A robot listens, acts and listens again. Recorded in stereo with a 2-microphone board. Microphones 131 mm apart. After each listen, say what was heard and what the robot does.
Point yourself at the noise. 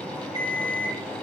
The alarm clock: about 35° right or 145° right. Turn 35° right.
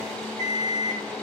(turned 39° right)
So it is at 110° right. Turn 110° right.
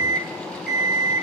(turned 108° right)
Found it: an alarm clock, straight ahead, 2 to 4 m away.